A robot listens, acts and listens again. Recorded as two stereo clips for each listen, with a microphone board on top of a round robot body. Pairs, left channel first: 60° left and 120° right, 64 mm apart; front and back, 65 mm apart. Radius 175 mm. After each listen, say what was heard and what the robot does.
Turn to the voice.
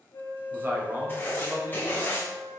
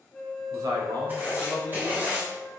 The man speaking: 175° right. Turn 175° right.
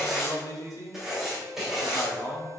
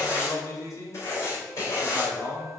The man speaking is now 30° left. Turn 30° left.
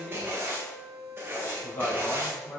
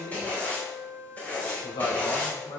Found it: a man speaking, straight ahead.